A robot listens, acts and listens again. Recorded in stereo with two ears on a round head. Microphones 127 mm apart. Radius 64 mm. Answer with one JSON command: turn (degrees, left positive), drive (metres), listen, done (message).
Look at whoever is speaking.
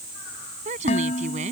{"turn": -55}
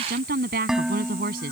{"turn": -70}
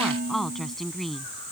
{"done": "Found it: a woman speaking, straight ahead."}